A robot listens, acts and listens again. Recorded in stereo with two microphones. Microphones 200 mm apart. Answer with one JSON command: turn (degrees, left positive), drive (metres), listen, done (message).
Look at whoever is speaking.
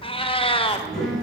{"turn": 30}
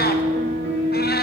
{"listen": true}
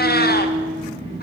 {"turn": -30}
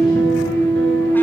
{"listen": true}
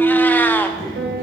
{"turn": 20}
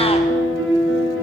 {"listen": true}
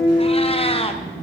{"done": "Found it: a child speaking, straight ahead."}